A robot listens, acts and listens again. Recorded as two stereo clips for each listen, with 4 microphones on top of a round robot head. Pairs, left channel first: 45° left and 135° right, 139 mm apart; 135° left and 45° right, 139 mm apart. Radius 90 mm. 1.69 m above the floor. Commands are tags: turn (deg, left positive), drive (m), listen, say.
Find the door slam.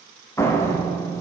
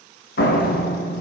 <turn deg="115"/>
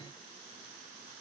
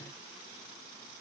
<say>Facing where the door slam came from. I can't hear it now.</say>